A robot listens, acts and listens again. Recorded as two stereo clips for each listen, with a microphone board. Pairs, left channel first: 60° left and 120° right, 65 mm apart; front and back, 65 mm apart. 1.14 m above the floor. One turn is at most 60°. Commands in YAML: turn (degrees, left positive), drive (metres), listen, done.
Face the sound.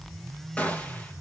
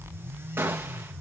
turn: 60
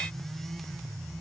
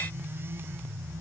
turn: 60
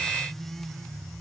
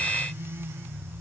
done: "Facing where the gunshot came from. I can't hear it now."